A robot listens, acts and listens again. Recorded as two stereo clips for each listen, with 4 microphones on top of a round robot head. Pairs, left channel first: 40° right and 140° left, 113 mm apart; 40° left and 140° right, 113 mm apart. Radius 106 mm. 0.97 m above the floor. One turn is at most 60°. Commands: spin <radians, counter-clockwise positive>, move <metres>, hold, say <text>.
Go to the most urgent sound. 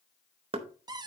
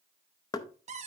hold
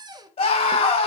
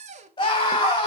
spin -0.17
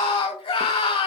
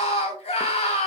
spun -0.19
move 1.0
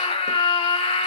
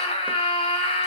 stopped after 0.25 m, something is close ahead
say Blocked. The scream is further on, straight ahead.